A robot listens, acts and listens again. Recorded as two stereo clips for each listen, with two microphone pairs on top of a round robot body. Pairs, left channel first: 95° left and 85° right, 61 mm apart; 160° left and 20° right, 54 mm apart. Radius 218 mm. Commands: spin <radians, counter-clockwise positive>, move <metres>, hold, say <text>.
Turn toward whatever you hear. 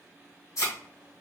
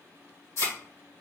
spin 2.36
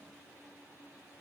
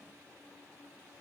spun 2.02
spin 0.35
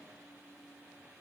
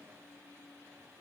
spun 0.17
spin 0.17
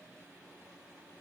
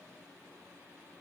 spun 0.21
say Facing where the thud came from. I can't hear it now.